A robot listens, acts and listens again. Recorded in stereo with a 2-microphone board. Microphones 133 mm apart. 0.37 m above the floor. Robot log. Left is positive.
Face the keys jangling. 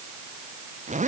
cmd idle
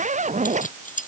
cmd yaw +90
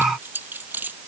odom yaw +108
note: So it is at 15° right.
cmd yaw -15
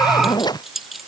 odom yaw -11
end: Facing the keys jangling.